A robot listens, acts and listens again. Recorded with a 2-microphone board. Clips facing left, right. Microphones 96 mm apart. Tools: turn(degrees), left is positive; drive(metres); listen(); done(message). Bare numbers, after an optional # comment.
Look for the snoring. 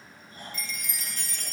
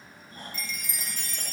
# The snoring: about 45° right or 135° right.
turn(-45)
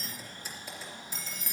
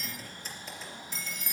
listen()
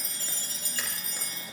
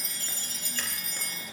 listen()
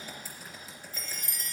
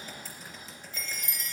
done("I heard snoring, but can't make it out now. It was about straight ahead or 90° right.")